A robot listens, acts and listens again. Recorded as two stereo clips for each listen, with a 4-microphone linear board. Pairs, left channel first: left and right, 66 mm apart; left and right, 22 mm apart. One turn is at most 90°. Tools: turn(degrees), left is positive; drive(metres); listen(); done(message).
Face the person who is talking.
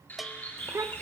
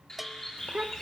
turn(degrees=-45)
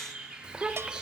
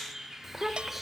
turn(degrees=-15)
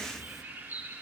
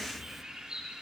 listen()
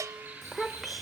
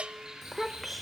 done("Found it: a child speaking, straight ahead.")